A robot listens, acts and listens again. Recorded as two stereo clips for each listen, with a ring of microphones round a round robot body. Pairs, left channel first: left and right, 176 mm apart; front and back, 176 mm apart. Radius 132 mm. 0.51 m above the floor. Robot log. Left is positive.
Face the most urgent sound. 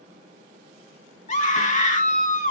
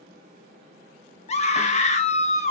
note: The scream: 45° left.
cmd yaw +45
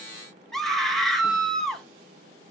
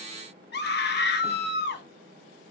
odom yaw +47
end: Facing the scream, 2 to 4 m away.